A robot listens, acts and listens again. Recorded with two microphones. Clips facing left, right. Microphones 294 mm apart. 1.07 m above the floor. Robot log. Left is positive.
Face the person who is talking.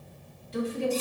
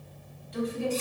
note: The woman speaking: about 30° left or 150° left.
cmd yaw +30
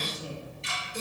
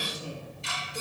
note: So it is at 120° left.
cmd yaw +120
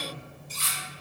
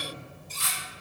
cmd idle
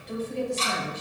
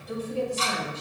end: Found it: a woman speaking, straight ahead, 2 to 4 m away.